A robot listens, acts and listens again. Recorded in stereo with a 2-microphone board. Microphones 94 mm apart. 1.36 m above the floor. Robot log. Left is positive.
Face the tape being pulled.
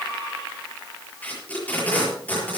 note: The tape being pulled: about 20° left or 160° left.
cmd yaw +20
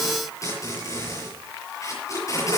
note: So it is at 140° left.
cmd yaw +140
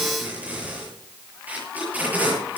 note: The tape being pulled is now 20° right.
cmd yaw -20
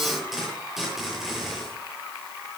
end: Facing the tape being pulled, over 4 m away.